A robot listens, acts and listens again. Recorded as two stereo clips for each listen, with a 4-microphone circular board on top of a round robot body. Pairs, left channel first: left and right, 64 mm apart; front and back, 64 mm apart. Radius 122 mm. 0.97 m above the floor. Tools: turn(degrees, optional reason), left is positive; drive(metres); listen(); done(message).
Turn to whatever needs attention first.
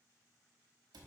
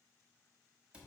listen()
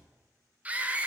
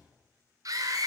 turn(degrees=-160, reason="The scream: 160° right.")
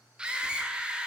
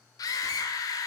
turn(degrees=-15, reason="The scream is now 15° right.")
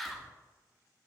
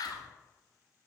done("Found it: a scream, straight ahead.")